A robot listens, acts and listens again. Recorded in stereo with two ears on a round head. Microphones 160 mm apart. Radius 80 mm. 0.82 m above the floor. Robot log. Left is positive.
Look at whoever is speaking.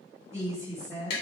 note: The woman speaking: about 20° right or 160° right.
cmd yaw -20
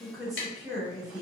end: Found it: a woman speaking, straight ahead.